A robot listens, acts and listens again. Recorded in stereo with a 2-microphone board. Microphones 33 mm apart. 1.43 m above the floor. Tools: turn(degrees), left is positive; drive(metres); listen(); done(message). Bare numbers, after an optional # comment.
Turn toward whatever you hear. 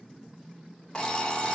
# The alarm clock: about 25° left or 155° left.
turn(25)
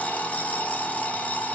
# So it is at 125° left.
turn(125)
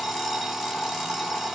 done("Found it: an alarm clock, straight ahead.")